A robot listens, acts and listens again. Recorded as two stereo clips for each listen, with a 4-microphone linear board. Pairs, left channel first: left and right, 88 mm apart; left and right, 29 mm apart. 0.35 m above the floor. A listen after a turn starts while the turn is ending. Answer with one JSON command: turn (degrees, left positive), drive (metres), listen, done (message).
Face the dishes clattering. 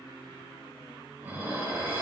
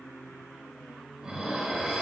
{"turn": -25}
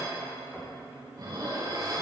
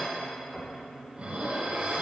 {"turn": -130}
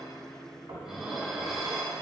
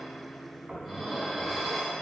{"done": "Facing the dishes clattering, 1 to 2 m away."}